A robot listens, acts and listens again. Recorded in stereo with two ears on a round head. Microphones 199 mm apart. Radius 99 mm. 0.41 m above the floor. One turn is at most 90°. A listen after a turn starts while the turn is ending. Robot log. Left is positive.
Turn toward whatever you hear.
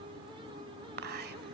note: The whispering: about 45° right or 135° right.
cmd yaw -45
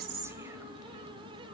cmd idle
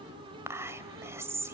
note: So it is at 15° right.
cmd yaw -15
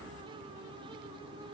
cmd idle
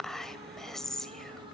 end: Found it: whispering, straight ahead, 1 to 2 m away.